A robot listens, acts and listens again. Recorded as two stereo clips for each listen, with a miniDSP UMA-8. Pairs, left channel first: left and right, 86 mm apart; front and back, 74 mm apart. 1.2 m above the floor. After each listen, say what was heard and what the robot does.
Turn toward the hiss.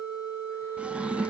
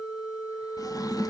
Keep listening.
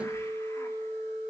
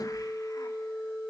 Keep listening.
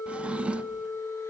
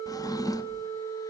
I can't make out a hiss to turn to.